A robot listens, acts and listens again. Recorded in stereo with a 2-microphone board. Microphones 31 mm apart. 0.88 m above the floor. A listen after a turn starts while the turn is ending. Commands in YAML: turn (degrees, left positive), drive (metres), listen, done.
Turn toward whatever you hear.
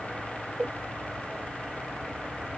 listen: true
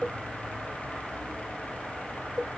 listen: true
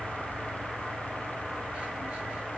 done: "I can't make out anything to turn to."